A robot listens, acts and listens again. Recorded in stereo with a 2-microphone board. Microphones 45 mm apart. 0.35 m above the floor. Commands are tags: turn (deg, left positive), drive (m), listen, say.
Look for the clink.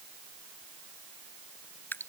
<listen/>
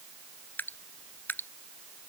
<listen/>
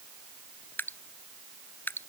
<say>I can't make out a clink, only dripping.</say>